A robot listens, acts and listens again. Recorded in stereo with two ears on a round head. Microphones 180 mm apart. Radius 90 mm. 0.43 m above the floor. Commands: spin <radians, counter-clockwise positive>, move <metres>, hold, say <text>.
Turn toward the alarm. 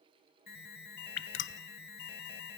spin 0.87
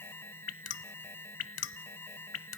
spin 0.26
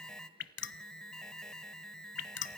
say Facing the alarm, 1 to 2 m away.